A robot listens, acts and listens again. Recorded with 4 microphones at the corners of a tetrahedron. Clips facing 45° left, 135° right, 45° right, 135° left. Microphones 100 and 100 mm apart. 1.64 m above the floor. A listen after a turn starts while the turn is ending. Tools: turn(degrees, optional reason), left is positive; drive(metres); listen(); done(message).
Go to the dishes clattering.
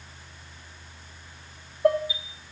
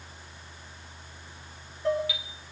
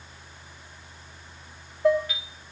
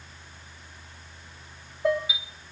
turn(degrees=45, reason="The dishes clattering: 45° left.")
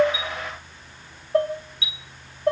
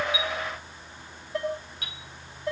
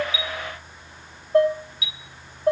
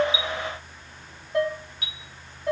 drive(metres=1.0)
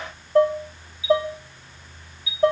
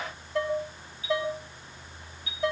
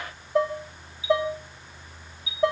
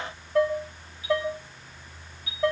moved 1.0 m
turn(degrees=15, reason="The dishes clattering is now 15° left.")
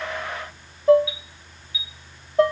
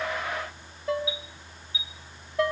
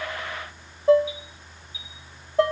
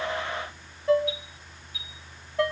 drive(metres=1.0)
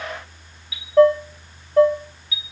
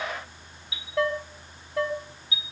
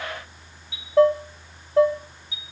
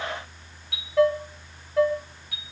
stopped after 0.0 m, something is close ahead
done("I am next to the dishes clattering.")